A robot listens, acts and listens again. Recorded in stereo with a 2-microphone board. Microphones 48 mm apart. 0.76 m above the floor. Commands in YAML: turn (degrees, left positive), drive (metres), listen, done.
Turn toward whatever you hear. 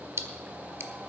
turn: -60
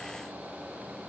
listen: true
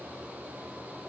done: "I heard a splash, but can't make it out now. It was about straight ahead or 60° right."